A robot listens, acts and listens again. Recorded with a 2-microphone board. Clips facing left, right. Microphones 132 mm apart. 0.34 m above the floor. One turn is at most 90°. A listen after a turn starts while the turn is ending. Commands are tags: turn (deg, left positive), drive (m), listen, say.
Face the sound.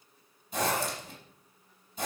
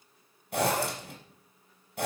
<turn deg="-90"/>
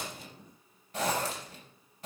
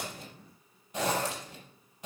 <turn deg="-15"/>
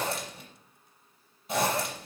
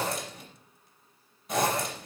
<say>Found it: a zipper, straight ahead.</say>